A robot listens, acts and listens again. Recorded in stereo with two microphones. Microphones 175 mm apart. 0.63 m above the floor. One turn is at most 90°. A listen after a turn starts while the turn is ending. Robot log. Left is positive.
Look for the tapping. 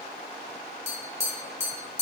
note: The tapping: about 35° left or 145° left.
cmd yaw +35
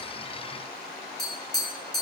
end: Found it: tapping, straight ahead, 2 to 4 m away.